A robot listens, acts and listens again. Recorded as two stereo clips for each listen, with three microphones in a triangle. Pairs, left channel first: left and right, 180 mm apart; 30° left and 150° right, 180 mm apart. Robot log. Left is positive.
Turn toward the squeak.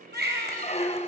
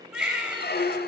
note: The squeak: 45° left.
cmd yaw +45
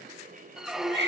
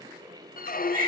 end: Facing the squeak.